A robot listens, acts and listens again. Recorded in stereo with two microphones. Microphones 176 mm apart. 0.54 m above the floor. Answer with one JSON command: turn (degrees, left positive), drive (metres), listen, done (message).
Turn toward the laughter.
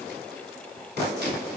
{"listen": true}
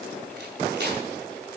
{"listen": true}
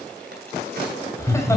{"turn": 15}
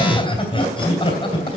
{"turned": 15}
{"turn": 150}
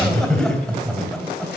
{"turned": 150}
{"done": "Facing the laughter."}